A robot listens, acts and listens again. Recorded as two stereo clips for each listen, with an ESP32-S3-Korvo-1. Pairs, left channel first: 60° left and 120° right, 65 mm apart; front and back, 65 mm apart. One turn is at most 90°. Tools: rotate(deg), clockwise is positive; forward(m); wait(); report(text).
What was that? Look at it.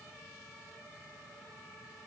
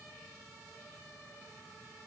wait()
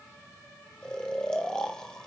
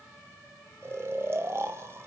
rotate(-90)
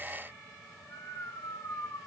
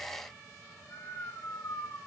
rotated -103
rotate(-35)
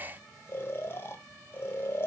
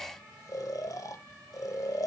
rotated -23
rotate(-10)
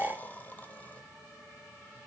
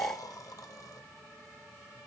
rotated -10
report("Facing the snoring.")